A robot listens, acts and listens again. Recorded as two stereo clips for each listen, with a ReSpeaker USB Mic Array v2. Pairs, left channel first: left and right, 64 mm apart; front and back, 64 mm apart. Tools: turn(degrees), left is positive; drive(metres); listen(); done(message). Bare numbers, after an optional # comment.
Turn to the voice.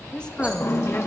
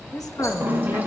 # The woman speaking: 15° left.
turn(15)
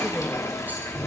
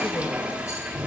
listen()
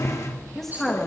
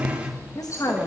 done("Found it: a woman speaking, straight ahead.")